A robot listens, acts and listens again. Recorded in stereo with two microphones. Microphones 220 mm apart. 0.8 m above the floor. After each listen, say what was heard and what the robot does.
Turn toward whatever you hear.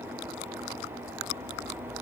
Keep listening.
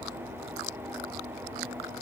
Keep listening.
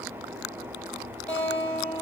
Turn 30° left.
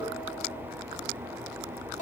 So it is at 140° left. Turn 140° left.
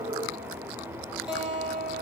Facing the guitar.